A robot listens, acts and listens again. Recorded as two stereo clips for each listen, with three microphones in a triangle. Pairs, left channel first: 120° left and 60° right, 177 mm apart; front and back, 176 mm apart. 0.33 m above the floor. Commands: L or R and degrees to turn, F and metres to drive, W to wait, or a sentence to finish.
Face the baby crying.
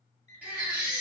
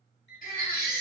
L20
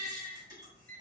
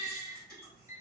Facing the baby crying.